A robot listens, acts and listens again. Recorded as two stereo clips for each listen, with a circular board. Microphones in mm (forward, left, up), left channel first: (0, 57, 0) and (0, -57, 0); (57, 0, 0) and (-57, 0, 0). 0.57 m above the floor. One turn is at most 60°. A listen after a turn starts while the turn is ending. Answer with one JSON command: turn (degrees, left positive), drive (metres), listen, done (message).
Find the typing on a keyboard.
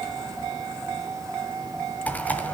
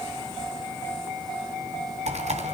{"turn": 60}
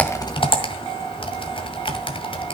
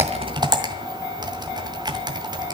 {"turn": 60}
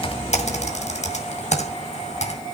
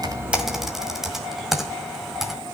{"turn": 60}
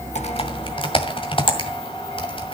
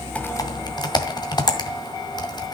{"turn": 50}
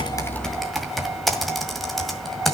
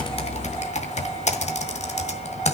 {"done": "Facing the typing on a keyboard."}